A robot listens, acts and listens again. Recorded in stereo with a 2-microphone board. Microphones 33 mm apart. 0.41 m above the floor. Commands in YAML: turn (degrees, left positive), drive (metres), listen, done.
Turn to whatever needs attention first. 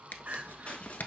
turn: -55
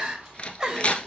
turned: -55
turn: -25
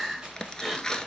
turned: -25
done: "Facing the crying, 1 to 2 m away."